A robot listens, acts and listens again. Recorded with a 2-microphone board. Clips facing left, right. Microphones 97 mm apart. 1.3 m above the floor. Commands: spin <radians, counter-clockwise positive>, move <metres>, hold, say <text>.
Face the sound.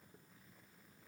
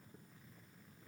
hold
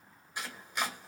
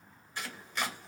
spin 0.52
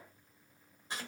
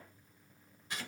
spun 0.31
spin 2.62
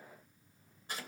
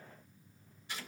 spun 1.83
spin 0.70
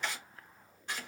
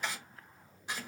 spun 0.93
spin -0.17
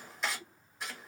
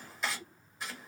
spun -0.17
say Facing the chopping, 1 to 2 m away.